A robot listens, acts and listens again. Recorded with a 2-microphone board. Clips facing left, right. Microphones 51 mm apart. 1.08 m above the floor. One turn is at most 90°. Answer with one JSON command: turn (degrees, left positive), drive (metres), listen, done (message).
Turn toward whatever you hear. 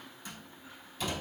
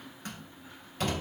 {"turn": -50}
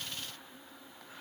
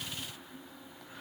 {"listen": true}
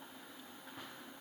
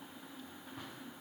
{"done": "I heard a door slam, but can't make it out now. It was about straight ahead or 80° right."}